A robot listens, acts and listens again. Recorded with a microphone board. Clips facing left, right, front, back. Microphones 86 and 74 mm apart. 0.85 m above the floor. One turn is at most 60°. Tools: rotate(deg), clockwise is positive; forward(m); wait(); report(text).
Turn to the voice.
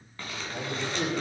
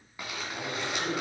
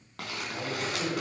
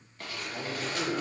rotate(-60)
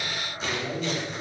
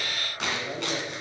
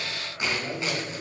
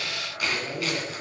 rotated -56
rotate(-40)
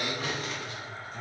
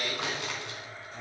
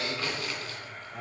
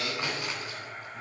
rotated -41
report("Facing the man speaking, over 4 m away.")